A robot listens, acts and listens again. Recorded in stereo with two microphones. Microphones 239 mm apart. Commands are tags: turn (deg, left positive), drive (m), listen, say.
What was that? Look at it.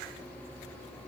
<listen/>
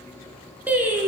<turn deg="-30"/>
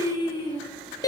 <turn deg="15"/>
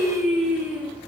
<say>Found it: singing, straight ahead, 2 to 4 m away.</say>